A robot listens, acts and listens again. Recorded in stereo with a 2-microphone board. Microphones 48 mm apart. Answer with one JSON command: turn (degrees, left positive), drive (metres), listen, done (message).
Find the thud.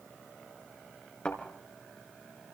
{"turn": 25}
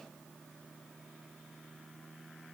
{"listen": true}
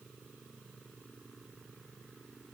{"done": "I heard a thud, but can't make it out now. It was about straight ahead or 130° left."}